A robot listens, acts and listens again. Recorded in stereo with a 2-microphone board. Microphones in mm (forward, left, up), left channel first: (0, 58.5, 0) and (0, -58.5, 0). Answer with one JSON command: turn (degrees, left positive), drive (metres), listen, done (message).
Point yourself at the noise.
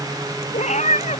{"turn": 90}
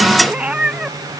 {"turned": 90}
{"turn": -10}
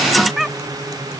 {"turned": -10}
{"done": "Found it: a cat meowing, straight ahead."}